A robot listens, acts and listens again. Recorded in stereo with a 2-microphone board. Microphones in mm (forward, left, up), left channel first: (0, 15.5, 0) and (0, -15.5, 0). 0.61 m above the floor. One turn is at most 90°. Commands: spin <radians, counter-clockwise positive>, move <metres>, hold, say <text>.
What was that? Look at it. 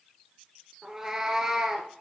spin -0.35
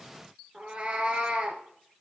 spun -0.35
spin -1.57
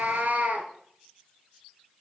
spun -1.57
spin -1.13
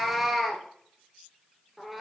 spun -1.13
say Found it: a cat meowing, straight ahead, 1 to 2 m away.